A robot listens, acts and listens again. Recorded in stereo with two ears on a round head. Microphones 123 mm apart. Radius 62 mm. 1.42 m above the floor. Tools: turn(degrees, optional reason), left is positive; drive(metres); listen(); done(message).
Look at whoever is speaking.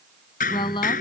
turn(degrees=35, reason="The woman speaking: about 35° left or 145° left.")
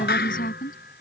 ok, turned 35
turn(degrees=110, reason="So it is at 110° left.")
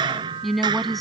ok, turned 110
done("Found it: a woman speaking, straight ahead.")